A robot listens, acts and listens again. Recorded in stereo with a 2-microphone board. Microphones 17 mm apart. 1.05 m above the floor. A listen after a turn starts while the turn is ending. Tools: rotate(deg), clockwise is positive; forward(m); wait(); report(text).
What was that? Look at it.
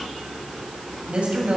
rotate(70)
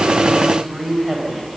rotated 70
report("Facing the woman speaking, over 4 m away.")